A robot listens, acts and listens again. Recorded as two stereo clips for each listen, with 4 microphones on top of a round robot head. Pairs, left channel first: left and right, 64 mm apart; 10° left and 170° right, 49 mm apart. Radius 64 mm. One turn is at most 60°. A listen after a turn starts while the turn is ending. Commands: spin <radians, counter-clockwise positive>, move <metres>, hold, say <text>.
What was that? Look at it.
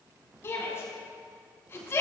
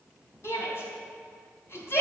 spin 0.70
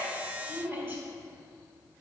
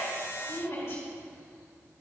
spin -0.52
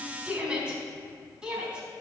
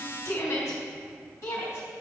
spin -0.26
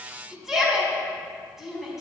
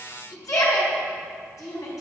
say Facing the shout, over 4 m away.